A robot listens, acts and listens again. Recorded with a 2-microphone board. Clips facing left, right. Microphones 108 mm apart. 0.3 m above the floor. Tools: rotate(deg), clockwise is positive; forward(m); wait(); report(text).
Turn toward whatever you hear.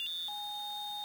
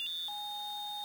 wait()
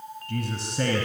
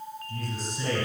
rotate(-70)
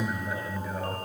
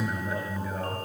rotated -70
report("Found it: a man speaking, straight ahead, 2 to 4 m away.")